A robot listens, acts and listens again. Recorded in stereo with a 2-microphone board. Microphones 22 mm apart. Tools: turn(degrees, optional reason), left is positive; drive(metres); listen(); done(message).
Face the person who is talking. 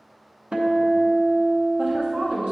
turn(degrees=-60, reason="The woman speaking: about 60° right or 120° right.")
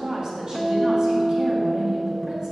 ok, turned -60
turn(degrees=-50, reason="So it is at 50° right.")
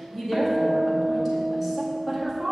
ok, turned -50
turn(degrees=-10, reason="The woman speaking is now 10° right.")
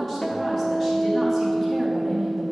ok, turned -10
done("Facing the woman speaking, 1 to 2 m away.")